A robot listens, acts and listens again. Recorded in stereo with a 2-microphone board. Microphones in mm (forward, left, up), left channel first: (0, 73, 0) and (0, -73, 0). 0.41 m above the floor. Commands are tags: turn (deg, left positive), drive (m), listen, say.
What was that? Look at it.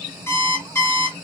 <turn deg="20"/>
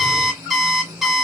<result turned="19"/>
<say>Facing the alarm clock, 1 to 2 m away.</say>